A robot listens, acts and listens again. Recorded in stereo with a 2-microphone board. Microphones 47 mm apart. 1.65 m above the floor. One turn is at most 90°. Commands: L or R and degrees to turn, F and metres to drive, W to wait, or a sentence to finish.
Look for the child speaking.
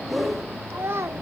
R60
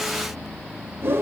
W
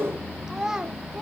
R15
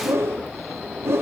W
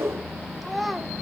Facing the child speaking, 1 to 2 m away.